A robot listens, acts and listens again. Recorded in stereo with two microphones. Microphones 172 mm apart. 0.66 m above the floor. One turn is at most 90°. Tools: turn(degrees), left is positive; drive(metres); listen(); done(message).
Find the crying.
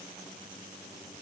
listen()
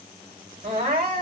turn(degrees=-70)
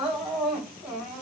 done("Found it: crying, straight ahead, 2 to 4 m away.")